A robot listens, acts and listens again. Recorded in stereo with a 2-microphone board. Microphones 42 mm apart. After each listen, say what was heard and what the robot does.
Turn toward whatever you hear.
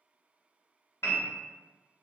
The piano: about 75° left or 105° left. Turn 75° left.
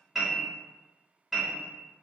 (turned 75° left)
Found it: a piano, straight ahead.